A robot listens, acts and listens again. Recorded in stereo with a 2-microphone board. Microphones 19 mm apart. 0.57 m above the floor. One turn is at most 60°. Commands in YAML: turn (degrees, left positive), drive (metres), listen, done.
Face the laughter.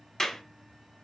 listen: true
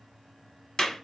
listen: true
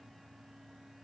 done: "I can't make out laughter, only a clap."